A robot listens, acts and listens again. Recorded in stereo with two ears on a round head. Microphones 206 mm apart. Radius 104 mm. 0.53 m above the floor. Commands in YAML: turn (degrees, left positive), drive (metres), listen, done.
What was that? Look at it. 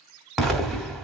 turn: 30
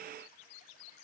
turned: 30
listen: true
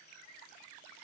done: "I heard an explosion, but can't make it out now. It was about 30° right or 150° left."